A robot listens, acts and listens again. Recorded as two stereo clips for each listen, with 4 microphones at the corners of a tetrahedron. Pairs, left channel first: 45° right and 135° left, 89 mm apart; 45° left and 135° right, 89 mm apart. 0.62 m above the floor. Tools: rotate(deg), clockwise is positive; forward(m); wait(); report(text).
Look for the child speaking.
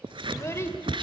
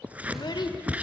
rotate(-10)
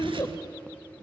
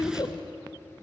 report("Facing the child speaking.")